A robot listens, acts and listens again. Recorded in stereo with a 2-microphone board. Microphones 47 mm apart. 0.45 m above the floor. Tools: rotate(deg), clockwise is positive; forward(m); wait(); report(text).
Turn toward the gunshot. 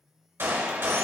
rotate(55)
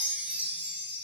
wait()
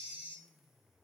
report("I heard a gunshot, but can't make it out now. It was about straight ahead or 70° right.")